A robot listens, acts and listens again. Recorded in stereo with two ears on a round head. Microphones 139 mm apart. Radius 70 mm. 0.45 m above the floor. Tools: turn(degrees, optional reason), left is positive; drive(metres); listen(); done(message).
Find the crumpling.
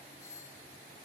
listen()
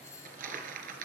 turn(degrees=-65, reason="The crumpling: about 65° right or 115° right.")
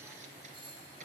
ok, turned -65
turn(degrees=-55, reason="So it is at 55° right.")
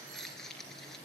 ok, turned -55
done("Facing the crumpling.")